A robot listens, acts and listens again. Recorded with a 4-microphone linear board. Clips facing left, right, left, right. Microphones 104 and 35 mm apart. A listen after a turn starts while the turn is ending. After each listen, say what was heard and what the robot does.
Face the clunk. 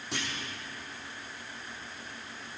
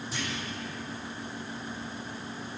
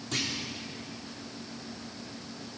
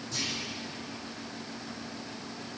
Turn 90° left.
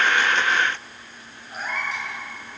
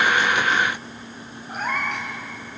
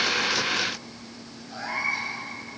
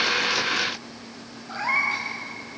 Facing where the clunk came from. I can't hear it now.